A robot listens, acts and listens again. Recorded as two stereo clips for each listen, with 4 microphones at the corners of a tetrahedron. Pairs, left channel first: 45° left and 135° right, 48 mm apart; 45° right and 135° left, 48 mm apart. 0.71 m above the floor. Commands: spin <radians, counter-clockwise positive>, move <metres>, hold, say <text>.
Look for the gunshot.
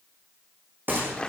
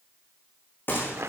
spin -1.57
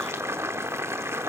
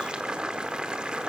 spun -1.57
say Facing where the gunshot came from. I can't hear it now.